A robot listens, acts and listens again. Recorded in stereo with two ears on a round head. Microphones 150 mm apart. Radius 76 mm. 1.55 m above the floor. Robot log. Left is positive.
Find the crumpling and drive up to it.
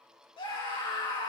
cmd idle
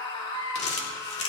note: The crumpling: about 40° left or 140° left.
cmd yaw +40
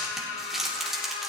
cmd fwd 1.0
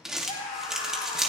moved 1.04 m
cmd fwd 1.0
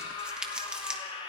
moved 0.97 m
cmd fwd 1.0
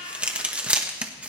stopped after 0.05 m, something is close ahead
note: The crumpling is now 10° right.
cmd yaw -10
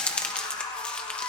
end: Arrived at the crumpling, straight ahead.